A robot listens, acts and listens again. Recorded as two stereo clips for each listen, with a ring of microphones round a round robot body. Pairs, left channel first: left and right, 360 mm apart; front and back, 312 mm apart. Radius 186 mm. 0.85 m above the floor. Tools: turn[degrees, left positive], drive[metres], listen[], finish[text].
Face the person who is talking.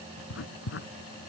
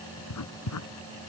Action: listen[]
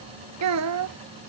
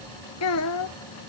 Thought: The child speaking: 45° right.
Action: turn[-45]
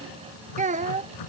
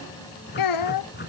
Thought: The child speaking is now 20° right.
Action: turn[-20]
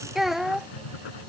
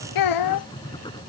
Action: finish[Found it: a child speaking, straight ahead.]